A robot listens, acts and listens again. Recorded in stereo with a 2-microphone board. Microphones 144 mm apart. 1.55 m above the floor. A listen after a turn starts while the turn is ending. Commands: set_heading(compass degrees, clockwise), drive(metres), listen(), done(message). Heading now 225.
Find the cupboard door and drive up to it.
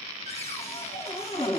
set_heading(175)
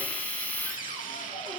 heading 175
listen()
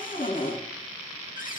set_heading(95)
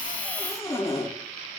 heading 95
set_heading(75)
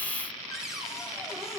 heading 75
drive(1.0)
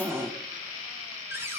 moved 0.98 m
set_heading(95)
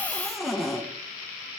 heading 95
drive(1.0)
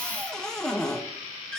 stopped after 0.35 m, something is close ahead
done("I am next to the cupboard door.")